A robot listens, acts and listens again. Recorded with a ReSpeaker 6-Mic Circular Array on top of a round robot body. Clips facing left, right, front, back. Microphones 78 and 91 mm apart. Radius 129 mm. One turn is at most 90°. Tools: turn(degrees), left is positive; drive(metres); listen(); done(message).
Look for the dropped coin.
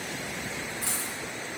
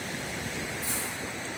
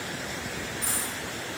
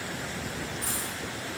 turn(degrees=90)
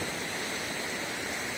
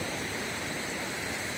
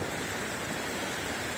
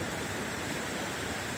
done("I heard a dropped coin from this way, but can't make it out now.")